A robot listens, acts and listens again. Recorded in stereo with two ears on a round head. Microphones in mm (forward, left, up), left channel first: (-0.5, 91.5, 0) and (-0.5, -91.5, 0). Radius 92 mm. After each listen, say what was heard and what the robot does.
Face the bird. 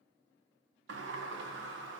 Keep listening.
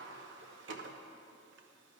Keep listening.
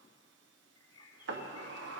The bird: about 25° left or 155° left. Turn 25° left.
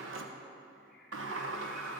Keep listening.
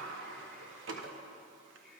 Keep listening.
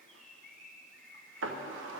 Facing the bird, 1 to 2 m away.